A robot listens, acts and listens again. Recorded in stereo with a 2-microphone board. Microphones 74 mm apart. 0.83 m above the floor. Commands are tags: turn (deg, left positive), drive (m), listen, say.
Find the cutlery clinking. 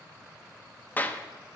<listen/>
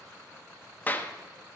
<listen/>
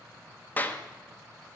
<say>I can't make out cutlery clinking to turn to.</say>